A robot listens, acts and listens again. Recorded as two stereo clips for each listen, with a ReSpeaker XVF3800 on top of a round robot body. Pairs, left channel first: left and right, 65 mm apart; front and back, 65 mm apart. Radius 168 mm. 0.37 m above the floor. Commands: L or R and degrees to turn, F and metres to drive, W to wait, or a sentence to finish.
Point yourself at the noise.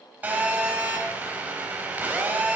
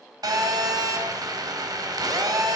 R155
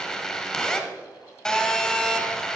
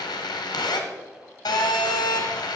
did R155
L10
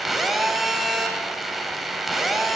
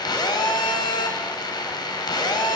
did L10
Found it: a phone buzzing, straight ahead, 1 to 2 m away.